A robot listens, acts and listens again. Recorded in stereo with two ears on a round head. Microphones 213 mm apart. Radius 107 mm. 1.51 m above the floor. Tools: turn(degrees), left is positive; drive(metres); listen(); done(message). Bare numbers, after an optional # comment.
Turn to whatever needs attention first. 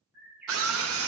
# The scream: about 60° right or 120° right.
turn(-60)
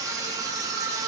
# So it is at 15° right.
turn(-15)
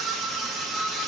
done("Facing the scream.")